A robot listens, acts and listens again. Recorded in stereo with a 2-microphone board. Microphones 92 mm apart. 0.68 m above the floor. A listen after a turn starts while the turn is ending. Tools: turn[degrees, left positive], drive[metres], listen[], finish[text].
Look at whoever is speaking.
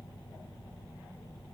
Action: listen[]
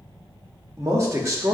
Thought: The man speaking: about 35° right or 145° right.
Action: turn[-35]
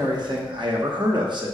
Thought: So it is at 100° right.
Action: turn[-100]
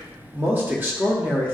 Thought: The man speaking is now 25° right.
Action: turn[-25]
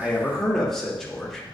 Action: finish[Facing the man speaking.]